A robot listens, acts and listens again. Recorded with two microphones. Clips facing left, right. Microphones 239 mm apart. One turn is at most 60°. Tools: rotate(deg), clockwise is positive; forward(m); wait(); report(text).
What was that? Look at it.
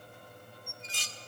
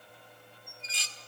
rotate(-50)
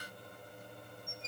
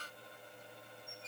rotate(-60)
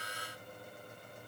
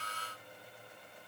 rotate(-25)
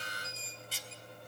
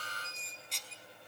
report("Facing the dishes clattering.")